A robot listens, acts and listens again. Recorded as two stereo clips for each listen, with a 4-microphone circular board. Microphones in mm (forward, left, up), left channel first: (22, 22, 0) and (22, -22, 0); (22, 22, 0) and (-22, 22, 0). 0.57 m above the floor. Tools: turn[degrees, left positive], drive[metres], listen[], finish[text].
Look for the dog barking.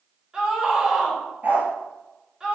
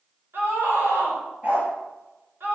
Thought: The dog barking: 130° right.
Action: turn[-130]
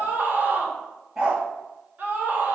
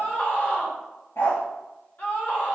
Thought: The dog barking is now 10° right.
Action: turn[-10]
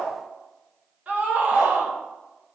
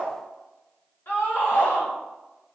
Action: listen[]
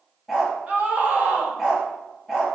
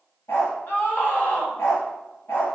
Action: finish[Facing the dog barking.]